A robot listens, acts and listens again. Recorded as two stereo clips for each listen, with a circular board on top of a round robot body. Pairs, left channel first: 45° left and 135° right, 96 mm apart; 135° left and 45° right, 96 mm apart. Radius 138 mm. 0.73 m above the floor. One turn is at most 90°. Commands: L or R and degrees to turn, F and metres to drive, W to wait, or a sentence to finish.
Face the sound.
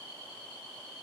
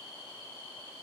W
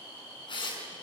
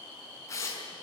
L75
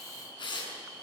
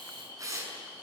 L10
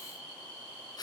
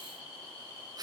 Found it: tearing paper, straight ahead.